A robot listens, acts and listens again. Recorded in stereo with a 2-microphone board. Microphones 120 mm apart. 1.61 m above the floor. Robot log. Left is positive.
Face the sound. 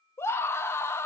note: The scream: about 20° left or 160° left.
cmd yaw +20
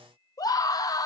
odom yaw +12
note: So it is at 150° left.
cmd yaw +150
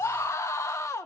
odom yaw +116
note: The scream is now 30° left.
cmd yaw +30
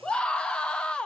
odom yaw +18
note: The scream is now 10° left.
cmd yaw +10
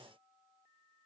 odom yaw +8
cmd idle
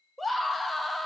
end: Found it: a scream, straight ahead, under 1 m away.